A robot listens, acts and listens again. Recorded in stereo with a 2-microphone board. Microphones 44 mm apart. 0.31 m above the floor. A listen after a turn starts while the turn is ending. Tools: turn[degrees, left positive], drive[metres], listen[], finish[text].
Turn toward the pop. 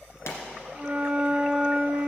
Thought: The pop: about 70° left or 110° left.
Action: turn[70]
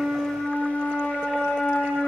Action: listen[]
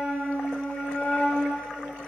Action: finish[I heard a pop, but can't make it out now. It was about straight ahead or 40° left.]